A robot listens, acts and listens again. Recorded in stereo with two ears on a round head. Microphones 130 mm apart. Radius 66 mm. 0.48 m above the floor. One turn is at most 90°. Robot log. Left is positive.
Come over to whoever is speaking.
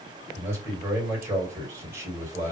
note: The man speaking: about 15° right or 165° right.
cmd yaw -15
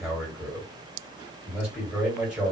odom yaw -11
cmd fwd 1.0
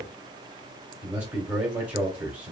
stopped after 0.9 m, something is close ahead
note: The man speaking is now 15° right.
cmd yaw -15
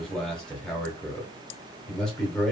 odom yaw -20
end: Arrived at the man speaking, straight ahead.